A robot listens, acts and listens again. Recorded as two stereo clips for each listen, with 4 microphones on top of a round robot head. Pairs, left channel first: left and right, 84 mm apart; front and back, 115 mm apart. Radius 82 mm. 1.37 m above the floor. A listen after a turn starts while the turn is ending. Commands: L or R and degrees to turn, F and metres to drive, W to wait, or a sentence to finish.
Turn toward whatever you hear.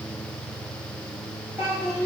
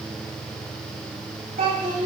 R165
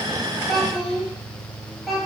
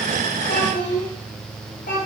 Facing the child speaking.